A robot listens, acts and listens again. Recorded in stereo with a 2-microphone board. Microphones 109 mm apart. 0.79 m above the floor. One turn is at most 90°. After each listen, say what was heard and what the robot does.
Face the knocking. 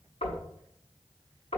The knocking: about 75° left or 105° left. Turn 75° left.
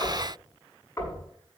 So it is at 25° left. Turn 25° left.
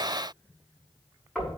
Facing the knocking, over 4 m away.